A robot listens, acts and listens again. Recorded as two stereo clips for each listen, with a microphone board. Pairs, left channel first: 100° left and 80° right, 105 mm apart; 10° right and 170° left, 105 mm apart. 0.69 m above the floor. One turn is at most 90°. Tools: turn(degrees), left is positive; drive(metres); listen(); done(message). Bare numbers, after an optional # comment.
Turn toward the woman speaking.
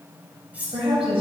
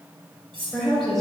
# The woman speaking: 100° right.
turn(-90)
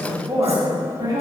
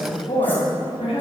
# The woman speaking is now 25° right.
turn(-25)
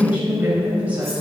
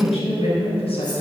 done("Facing the woman speaking.")